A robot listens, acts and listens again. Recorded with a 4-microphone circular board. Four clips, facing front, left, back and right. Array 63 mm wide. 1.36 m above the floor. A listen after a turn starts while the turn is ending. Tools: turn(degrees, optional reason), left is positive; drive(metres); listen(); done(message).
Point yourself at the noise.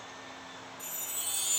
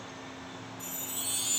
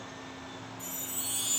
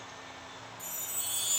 turn(degrees=70, reason="The chime: 70° left.")
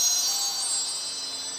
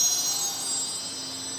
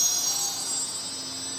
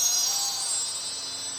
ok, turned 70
turn(degrees=-10, reason="The chime is now 10° right.")
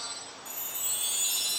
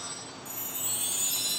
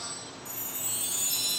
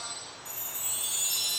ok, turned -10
done("Facing the chime.")